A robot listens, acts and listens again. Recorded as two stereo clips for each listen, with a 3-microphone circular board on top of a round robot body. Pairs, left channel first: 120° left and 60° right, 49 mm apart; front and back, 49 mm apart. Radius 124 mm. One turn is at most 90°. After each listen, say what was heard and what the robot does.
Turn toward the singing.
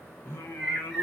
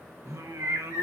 The singing: 160° left. Turn 90° left.
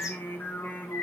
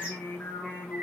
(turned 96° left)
The singing is now 65° left. Turn 65° left.
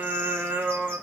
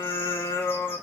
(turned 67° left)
Found it: singing, straight ahead.